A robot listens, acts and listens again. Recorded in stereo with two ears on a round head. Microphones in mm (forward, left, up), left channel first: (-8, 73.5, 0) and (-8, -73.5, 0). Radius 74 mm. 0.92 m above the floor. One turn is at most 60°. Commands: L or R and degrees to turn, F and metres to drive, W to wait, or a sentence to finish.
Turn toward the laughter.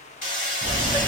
L30
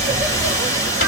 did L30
R25
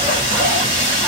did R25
W
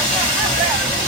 Found it: laughter, straight ahead.